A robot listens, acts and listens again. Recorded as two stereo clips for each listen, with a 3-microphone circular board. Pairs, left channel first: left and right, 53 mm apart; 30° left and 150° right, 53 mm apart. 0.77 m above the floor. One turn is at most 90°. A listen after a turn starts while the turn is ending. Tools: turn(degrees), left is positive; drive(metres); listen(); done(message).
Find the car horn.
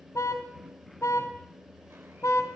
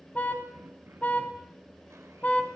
turn(degrees=90)
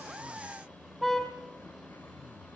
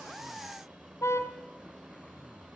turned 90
done("Facing the car horn, 2 to 4 m away.")